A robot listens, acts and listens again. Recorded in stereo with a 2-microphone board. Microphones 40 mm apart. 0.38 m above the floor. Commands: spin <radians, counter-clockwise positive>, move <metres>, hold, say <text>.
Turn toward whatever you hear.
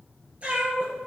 spin -0.52
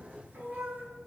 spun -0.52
spin -2.27
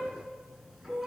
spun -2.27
spin -0.17
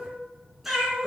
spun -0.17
spin -0.17
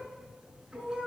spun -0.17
spin -0.35
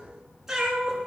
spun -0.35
spin -0.26
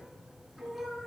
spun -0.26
say Facing the cat meowing.